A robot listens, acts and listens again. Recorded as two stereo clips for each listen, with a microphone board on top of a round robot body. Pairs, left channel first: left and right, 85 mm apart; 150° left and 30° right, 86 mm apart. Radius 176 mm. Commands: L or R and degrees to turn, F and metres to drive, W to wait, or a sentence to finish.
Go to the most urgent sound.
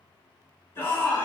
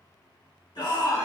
L145
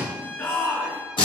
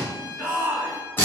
L40
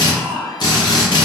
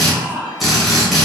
L10
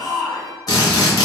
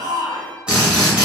F1.0
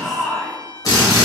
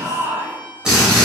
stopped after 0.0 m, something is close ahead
Blocked. The shout is further on, straight ahead.